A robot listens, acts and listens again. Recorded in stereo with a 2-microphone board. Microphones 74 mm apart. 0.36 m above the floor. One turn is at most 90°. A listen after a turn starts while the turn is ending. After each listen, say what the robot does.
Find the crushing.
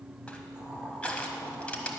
Turn 15° left.
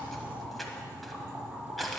Facing the crushing, 1 to 2 m away.